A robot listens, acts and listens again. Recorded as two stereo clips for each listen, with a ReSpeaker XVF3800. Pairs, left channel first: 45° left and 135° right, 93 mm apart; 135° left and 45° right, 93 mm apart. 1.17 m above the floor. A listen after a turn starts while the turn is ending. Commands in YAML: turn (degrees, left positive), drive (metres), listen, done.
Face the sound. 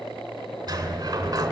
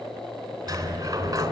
turn: -85
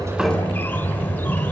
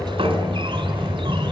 turn: -20
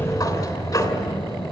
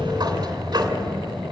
done: "Facing the sliding door."